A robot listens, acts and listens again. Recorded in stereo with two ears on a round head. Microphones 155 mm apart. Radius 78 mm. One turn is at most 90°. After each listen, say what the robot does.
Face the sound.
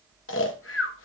Turn 90° left.
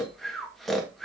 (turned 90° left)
Facing the snoring.